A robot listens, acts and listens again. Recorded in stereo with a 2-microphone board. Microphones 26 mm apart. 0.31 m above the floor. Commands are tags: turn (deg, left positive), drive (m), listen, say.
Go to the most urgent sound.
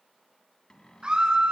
<turn deg="-30"/>
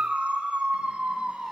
<turn deg="-120"/>
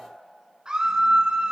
<turn deg="-35"/>
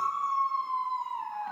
<turn deg="10"/>
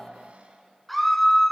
<drive m="1.0"/>
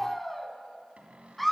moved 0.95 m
<drive m="1.0"/>
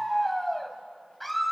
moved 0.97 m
<drive m="1.0"/>
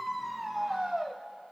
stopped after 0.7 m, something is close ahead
<say>Arrived at the scream, straight ahead.</say>